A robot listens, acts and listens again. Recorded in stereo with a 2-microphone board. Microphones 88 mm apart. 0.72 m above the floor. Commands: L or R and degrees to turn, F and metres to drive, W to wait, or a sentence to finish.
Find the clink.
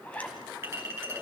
R30
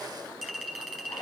Found it: a clink, straight ahead.